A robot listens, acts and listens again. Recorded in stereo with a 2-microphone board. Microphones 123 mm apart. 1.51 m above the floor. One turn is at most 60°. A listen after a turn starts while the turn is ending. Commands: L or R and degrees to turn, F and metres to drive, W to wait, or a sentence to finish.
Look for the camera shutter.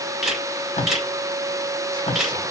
R30
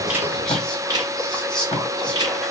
R60
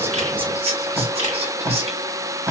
R60
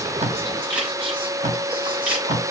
R15
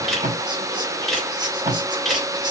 Facing the camera shutter.